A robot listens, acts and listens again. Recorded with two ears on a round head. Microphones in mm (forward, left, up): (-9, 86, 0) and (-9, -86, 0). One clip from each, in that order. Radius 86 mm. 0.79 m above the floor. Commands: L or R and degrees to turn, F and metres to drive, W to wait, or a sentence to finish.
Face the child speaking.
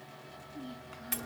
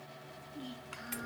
R40
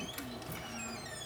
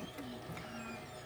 W
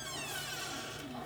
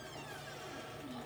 W
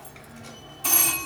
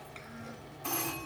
I heard a child speaking, but can't make it out now. It was about straight ahead or 100° right.